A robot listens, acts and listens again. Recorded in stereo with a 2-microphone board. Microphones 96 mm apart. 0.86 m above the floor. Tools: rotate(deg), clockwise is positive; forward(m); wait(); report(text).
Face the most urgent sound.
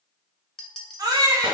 rotate(40)
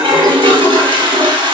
wait()
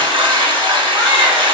wait()
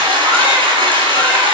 report("I heard a baby crying, but can't make it out now. It was about straight ahead or 100° right.")